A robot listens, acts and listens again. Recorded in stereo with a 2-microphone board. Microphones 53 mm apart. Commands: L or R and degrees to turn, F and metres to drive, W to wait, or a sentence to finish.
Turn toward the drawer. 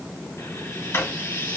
L50
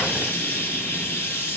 W
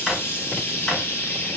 Facing the drawer, 2 to 4 m away.